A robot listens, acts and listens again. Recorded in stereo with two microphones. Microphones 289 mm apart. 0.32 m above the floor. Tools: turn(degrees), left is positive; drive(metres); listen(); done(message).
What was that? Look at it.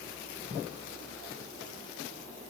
listen()
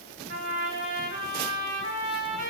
turn(degrees=-55)
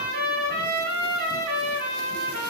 turn(degrees=-55)
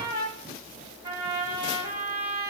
turn(degrees=-15)
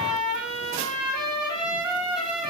done("Facing the trumpet, 1 to 2 m away.")